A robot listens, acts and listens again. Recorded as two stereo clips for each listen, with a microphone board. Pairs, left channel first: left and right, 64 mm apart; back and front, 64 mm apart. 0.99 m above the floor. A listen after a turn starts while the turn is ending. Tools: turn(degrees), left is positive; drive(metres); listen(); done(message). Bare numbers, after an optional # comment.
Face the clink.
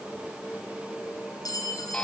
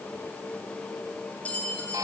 # The clink: 110° left.
turn(110)
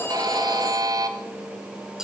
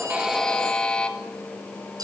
# The clink is now 10° right.
turn(-10)
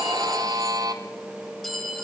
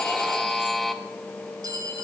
done("Facing the clink, over 4 m away.")